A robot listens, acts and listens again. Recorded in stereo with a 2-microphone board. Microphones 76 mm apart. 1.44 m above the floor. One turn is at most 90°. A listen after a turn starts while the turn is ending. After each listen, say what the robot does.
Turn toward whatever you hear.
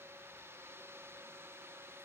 Keep listening.
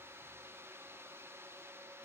Keep listening.
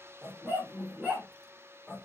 Turn 30° right.
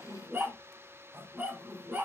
Turn 90° right.
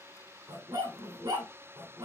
Turn 60° right.
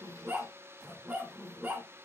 Turn 15° right.
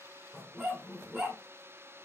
Facing the dog barking, 2 to 4 m away.